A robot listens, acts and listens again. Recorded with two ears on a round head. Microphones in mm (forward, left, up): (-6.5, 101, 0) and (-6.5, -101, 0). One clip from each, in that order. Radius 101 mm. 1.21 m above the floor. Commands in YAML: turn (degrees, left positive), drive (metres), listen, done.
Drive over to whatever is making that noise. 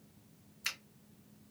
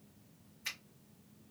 turn: 50
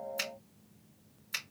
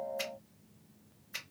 turn: 80
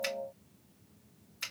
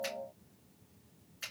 turn: 25
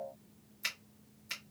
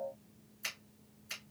drive: 1.0
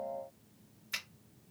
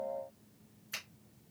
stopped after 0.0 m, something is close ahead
turn: 10
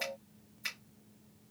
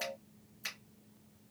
done: "Something is in my way. I am facing the finger snap but have not reached it."